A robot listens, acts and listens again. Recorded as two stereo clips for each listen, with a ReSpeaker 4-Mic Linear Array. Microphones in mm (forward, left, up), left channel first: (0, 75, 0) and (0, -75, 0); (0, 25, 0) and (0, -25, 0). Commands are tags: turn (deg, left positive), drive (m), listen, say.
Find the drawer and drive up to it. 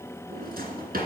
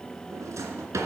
<turn deg="-90"/>
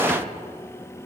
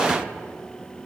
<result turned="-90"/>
<drive m="1.0"/>
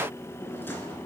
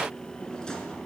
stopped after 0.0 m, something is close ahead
<turn deg="15"/>
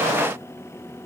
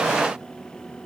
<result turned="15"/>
<listen/>
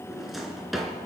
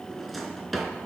<say>Something is in my way. I am facing the drawer but have not reached it.</say>